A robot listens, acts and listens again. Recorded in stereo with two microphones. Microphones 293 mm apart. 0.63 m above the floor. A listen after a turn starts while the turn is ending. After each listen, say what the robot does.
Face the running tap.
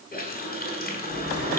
Turn 30° left.
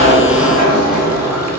Keep listening.
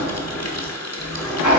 Turn 120° left.
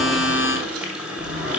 Facing the running tap, 1 to 2 m away.